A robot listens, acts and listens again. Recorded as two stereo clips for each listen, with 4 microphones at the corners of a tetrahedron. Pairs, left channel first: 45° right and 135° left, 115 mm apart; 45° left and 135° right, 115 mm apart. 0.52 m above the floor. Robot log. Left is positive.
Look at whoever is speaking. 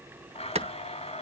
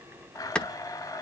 cmd idle
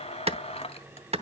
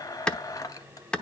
cmd idle
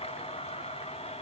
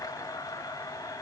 end: I can't make out anyone speaking to turn to.